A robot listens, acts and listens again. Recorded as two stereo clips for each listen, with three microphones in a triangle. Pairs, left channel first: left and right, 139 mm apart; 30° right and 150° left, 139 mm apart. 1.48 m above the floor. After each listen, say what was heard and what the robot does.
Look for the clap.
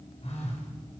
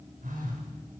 Keep listening.
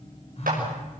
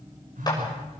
The clap: 90° right. Turn 90° right.
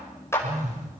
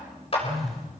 The clap is now 20° left. Turn 20° left.
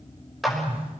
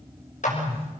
Facing the clap, over 4 m away.